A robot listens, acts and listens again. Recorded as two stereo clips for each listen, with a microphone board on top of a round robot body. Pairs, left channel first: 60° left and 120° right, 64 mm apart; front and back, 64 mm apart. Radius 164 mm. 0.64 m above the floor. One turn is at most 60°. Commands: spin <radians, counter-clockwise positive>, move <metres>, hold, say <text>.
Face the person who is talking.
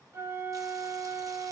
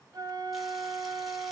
hold
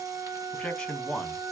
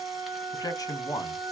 spin -0.26
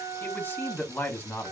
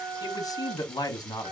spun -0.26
say Found it: a man speaking, straight ahead.